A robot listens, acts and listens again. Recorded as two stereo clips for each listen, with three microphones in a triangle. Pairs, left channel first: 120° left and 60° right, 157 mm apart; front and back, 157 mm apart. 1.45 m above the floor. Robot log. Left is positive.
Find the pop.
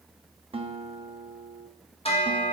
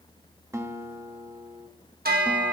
cmd idle
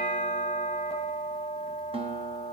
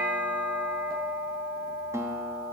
cmd idle
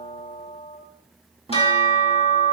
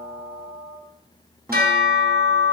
end: I can't make out a pop, only a guitar and a bell.